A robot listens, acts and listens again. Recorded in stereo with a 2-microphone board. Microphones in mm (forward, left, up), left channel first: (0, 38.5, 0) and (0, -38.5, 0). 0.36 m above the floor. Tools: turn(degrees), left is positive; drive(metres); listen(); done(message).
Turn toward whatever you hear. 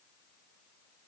listen()
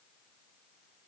listen()
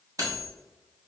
turn(degrees=-55)
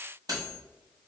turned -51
turn(degrees=-70)
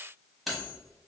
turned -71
done("Facing the cutlery clinking.")